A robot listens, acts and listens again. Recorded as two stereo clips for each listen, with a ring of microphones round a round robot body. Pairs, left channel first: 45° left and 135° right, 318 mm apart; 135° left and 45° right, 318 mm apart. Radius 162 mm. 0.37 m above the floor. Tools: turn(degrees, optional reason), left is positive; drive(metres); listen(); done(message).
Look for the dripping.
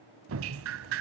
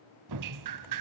turn(degrees=-80, reason="The dripping: 80° right.")
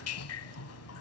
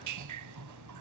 done("Found it: dripping, straight ahead.")